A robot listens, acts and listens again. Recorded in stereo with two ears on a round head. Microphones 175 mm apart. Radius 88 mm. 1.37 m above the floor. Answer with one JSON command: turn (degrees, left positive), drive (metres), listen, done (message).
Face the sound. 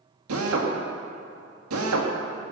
{"turn": -90}
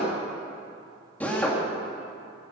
{"turn": 10}
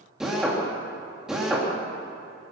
{"done": "Found it: a drill, straight ahead, 2 to 4 m away."}